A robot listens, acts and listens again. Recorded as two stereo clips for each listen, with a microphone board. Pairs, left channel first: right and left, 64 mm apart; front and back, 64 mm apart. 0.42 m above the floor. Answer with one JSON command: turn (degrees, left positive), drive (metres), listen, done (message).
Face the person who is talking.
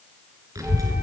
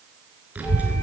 {"turn": 115}
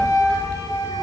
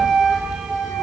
{"turn": -25}
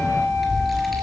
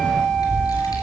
{"done": "Facing the child speaking."}